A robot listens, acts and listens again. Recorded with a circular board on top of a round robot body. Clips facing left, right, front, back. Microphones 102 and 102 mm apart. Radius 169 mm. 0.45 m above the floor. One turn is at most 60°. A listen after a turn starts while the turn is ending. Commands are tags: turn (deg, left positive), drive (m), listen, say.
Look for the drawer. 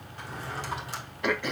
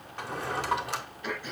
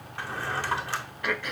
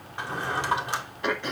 <turn deg="-60"/>
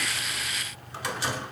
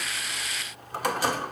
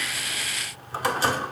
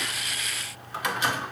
<turn deg="-50"/>
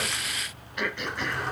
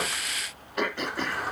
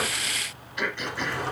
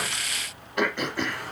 <say>Found it: a drawer, straight ahead, 1 to 2 m away.</say>